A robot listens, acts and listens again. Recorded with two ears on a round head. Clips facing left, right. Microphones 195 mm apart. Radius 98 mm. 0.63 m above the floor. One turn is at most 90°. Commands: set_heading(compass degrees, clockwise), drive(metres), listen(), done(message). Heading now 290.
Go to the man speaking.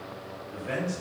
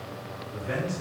set_heading(245)
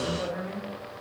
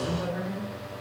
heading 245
set_heading(165)
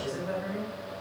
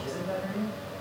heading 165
drive(1.0)
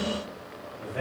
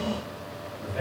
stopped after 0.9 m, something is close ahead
done("Arrived at the man speaking, straight ahead.")